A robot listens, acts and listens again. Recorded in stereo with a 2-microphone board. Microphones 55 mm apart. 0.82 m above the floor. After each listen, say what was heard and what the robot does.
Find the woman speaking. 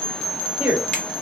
The woman speaking: about 25° right or 155° right. Turn 25° right.
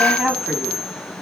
Found it: a woman speaking, straight ahead.